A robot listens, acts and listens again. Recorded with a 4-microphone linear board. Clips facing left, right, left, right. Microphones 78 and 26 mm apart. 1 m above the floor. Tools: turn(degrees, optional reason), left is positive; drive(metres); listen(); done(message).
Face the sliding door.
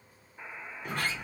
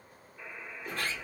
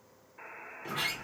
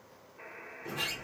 turn(degrees=65, reason="The sliding door: about 65° left or 115° left.")
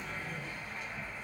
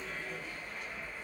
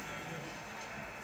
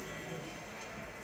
turn(degrees=15, reason="So it is at 15° left.")
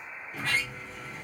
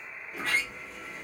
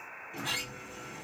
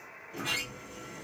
done("Facing the sliding door.")